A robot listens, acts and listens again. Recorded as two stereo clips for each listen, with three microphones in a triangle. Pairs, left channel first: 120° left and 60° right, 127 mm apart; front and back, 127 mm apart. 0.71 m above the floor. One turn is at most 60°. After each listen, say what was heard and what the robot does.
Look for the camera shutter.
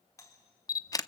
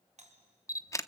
The camera shutter: 60° left. Turn 60° left.
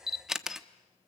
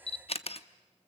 The camera shutter is now 25° left. Turn 25° left.
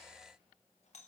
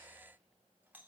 Keep listening.
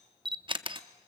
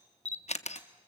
The camera shutter is now 15° right. Turn 15° right.
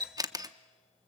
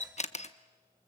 Facing the camera shutter, under 1 m away.